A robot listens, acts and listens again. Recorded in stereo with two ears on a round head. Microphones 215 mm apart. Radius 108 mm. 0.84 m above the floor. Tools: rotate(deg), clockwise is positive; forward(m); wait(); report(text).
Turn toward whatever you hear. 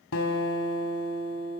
rotate(-60)
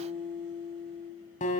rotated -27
rotate(-35)
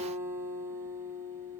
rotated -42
rotate(10)
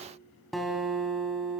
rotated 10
report("Found it: a guitar, straight ahead, 2 to 4 m away.")